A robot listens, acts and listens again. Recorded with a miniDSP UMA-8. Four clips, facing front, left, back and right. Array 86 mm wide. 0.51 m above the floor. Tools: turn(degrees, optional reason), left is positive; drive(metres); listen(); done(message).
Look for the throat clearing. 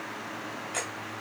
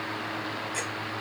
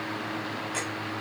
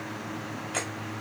listen()
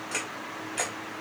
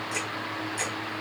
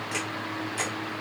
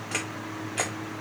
listen()
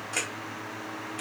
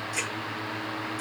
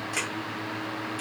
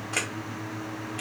done("I can't make out throat clearing to turn to.")